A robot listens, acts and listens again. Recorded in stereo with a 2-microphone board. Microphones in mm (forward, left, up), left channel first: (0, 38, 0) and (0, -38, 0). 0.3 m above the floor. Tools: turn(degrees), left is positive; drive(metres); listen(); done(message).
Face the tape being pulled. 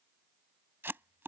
turn(degrees=-30)
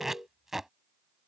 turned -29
done("Facing the tape being pulled.")